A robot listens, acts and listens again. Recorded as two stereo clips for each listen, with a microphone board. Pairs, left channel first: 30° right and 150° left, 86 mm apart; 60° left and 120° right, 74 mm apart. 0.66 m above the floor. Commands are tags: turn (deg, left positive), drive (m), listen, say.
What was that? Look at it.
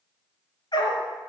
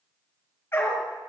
<say>Facing the dog barking.</say>